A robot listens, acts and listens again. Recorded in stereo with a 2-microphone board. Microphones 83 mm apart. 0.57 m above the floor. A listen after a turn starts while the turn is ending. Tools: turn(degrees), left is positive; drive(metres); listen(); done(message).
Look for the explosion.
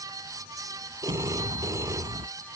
turn(degrees=-75)
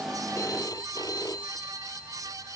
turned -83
listen()
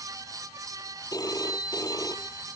done("I heard an explosion, but can't make it out now. It was about 10° left or 20° right.")